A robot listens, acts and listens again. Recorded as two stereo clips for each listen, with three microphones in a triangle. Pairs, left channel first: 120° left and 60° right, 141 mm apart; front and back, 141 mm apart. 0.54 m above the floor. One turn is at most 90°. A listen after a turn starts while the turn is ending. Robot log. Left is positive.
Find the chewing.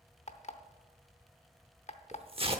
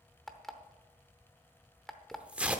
cmd idle
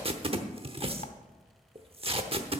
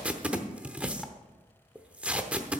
cmd idle
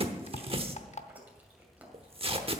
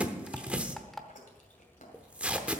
note: The chewing: 20° left.
cmd yaw +20
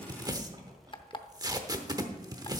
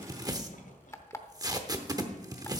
cmd idle
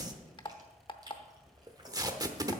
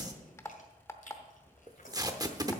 end: Found it: chewing, straight ahead.